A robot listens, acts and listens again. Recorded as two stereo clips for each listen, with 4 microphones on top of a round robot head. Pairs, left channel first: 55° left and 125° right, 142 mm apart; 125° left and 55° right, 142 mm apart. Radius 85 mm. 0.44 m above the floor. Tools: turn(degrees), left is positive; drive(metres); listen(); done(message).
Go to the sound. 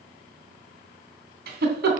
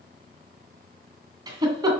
turn(degrees=-120)
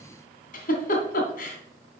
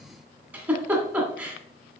turn(degrees=25)
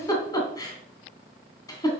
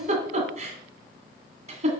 turn(degrees=-10)
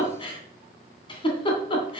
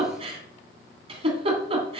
drive(metres=1.0)
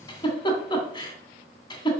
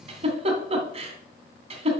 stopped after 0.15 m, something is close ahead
done("Blocked. The giggle is further on, straight ahead.")